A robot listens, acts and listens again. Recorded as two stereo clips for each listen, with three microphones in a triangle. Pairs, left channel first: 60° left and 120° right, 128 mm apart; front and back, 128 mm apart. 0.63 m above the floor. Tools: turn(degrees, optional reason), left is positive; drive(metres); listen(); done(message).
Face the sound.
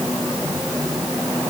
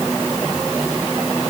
listen()
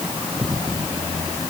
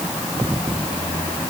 listen()
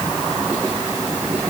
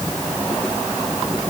done("I can't make out anything to turn to.")